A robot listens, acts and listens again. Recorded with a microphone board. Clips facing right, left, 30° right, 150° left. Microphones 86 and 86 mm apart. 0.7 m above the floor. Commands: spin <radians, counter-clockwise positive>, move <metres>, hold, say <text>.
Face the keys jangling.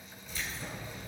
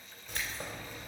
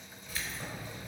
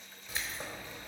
spin 1.48
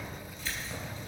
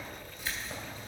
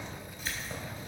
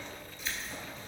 spin 0.35
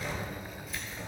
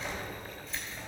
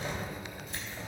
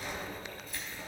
say Found it: keys jangling, straight ahead.